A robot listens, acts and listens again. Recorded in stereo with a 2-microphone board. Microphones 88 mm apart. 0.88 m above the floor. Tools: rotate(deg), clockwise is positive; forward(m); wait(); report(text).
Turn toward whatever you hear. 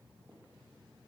wait()
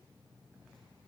wait()
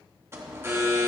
rotate(25)
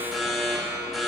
report("Facing the alarm.")